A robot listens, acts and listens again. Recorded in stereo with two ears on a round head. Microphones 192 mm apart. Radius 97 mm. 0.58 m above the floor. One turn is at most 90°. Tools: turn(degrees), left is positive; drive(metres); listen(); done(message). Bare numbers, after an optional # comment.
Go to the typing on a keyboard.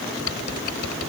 # The typing on a keyboard: about 75° left or 105° left.
turn(75)
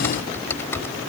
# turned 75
# So it is at 10° left.
turn(10)
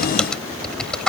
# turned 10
drive(1.0)
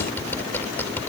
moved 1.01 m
# The typing on a keyboard is now 10° left.
turn(10)
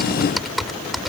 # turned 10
drive(1.0)
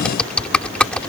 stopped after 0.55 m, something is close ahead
done("Arrived at the typing on a keyboard, straight ahead.")